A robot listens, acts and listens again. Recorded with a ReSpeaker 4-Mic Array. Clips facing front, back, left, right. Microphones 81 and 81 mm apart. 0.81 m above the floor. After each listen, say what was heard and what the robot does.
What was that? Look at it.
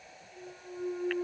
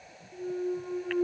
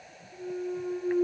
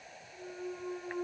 The clunk: 175° left. Turn 175° left.
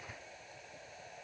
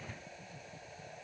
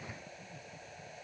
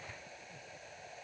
Facing where the clunk came from. I can't hear it now.